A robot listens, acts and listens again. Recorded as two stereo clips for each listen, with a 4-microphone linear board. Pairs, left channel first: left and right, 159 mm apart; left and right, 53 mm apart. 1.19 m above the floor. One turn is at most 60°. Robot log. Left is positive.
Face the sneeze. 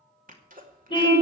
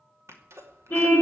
note: The sneeze: about 60° right or 120° right.
cmd yaw -60
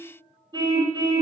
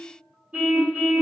cmd idle
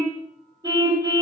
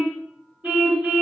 end: I heard a sneeze, but can't make it out now. It was about straight ahead or 60° right.